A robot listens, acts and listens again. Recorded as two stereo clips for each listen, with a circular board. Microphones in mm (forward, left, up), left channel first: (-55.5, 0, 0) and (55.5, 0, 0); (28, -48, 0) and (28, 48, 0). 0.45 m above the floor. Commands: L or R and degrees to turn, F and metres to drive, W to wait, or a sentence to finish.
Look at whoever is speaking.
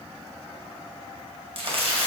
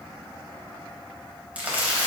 W
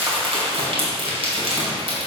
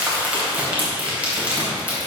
W
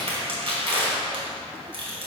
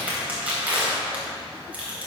I can't make out anyone speaking, only crumpling.